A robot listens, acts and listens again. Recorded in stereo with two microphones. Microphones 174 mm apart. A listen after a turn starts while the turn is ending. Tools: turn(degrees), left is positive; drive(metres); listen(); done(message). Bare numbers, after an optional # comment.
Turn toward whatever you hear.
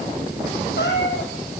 turn(90)
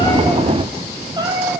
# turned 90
# So it is at 25° right.
turn(-25)
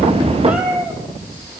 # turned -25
# The cat meowing is now 10° right.
turn(-10)
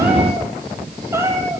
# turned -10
# The cat meowing is now 20° right.
turn(-20)
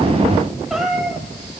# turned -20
done("Found it: a cat meowing, straight ahead.")